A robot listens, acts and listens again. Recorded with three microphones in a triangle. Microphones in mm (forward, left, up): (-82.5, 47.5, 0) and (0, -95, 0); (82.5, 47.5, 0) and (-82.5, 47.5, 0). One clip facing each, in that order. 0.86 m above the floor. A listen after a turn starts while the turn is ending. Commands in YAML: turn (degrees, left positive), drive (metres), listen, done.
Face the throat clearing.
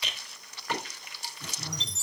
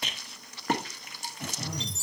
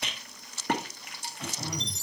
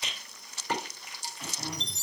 turn: -60
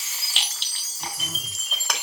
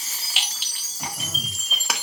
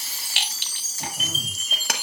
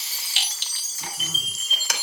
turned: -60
listen: true
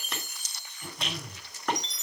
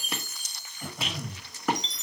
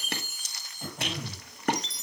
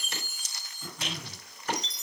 turn: -10
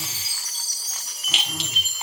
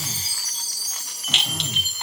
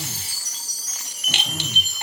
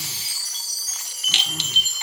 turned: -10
listen: true
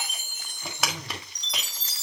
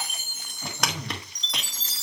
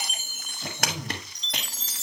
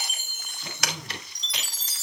done: "Facing the throat clearing."